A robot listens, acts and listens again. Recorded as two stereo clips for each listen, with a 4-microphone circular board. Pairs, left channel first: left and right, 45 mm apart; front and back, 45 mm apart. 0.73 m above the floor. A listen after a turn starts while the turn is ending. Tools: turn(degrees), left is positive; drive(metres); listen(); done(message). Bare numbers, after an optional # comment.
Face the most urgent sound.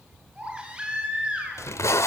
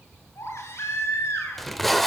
# The baby crying: 25° right.
turn(-25)
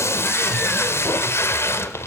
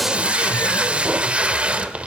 listen()
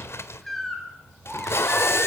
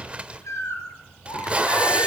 done("Facing the baby crying, over 4 m away.")